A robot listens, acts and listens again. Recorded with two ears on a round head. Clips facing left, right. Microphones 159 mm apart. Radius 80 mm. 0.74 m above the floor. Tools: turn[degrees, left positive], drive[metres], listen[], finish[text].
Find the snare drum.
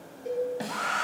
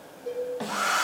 Thought: The snare drum: about 25° left or 155° left.
Action: turn[25]
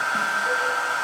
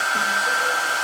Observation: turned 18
Action: listen[]
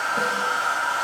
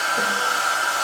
Action: listen[]
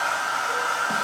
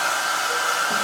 Action: finish[I heard a snare drum, but can't make it out now. It was about 5° left or 140° left.]